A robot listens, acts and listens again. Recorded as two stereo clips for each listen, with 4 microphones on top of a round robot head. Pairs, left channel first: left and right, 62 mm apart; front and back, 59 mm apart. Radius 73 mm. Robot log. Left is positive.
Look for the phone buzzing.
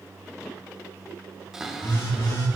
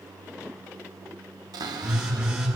note: The phone buzzing: 100° left.
cmd yaw +100
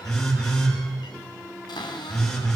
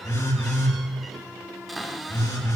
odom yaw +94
note: The phone buzzing is now 10° left.
cmd yaw +10
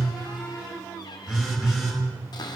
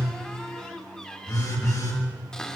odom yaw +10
end: Found it: a phone buzzing, straight ahead, over 4 m away.